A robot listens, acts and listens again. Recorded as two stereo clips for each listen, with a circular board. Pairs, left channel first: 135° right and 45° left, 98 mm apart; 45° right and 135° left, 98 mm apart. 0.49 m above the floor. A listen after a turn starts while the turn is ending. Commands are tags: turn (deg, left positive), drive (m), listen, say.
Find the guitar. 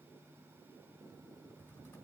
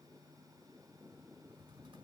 <listen/>
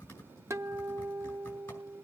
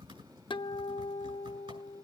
<turn deg="-15"/>
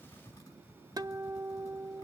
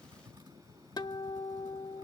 <say>Found it: a guitar, straight ahead.</say>